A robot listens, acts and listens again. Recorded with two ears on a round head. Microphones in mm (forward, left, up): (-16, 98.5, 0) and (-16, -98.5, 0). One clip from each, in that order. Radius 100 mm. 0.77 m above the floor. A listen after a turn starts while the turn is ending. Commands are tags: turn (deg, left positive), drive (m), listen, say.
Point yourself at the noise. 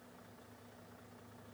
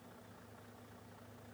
<listen/>
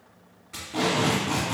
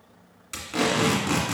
<turn deg="-60"/>
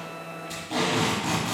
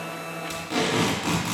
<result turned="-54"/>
<turn deg="-35"/>
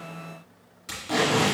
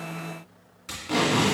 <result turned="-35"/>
<say>Facing the tape being pulled, 1 to 2 m away.</say>